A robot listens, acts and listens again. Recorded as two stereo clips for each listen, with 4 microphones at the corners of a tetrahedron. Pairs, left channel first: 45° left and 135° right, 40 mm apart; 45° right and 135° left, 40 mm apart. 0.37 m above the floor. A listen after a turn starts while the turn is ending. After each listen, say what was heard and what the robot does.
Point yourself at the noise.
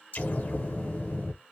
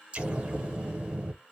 The explosion: 80° left. Turn 80° left.
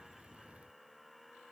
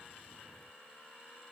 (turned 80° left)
Facing where the explosion came from. I can't hear it now.